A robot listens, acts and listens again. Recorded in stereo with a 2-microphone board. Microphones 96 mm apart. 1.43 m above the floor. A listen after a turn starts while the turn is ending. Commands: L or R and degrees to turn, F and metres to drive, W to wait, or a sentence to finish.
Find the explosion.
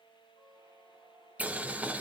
W
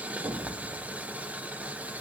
R60
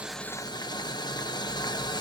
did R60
W
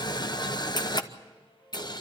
I heard an explosion, but can't make it out now. It was about straight ahead or 60° right.